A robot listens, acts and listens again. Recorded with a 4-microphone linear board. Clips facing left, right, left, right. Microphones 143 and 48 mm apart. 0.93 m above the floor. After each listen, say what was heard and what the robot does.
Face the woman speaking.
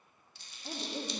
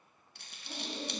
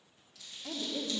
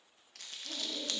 The woman speaking: about 65° left or 115° left. Turn 65° left.
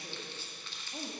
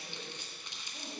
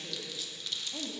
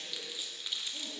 Keep listening.
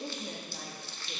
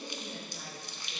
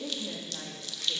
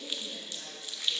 So it is at 70° left. Turn 70° left.
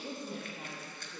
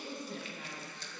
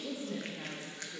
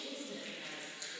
The woman speaking is now 40° left. Turn 40° left.
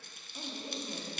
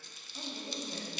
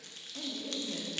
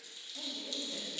The woman speaking is now 15° left. Turn 15° left.
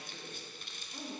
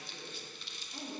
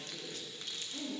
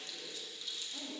Facing the woman speaking.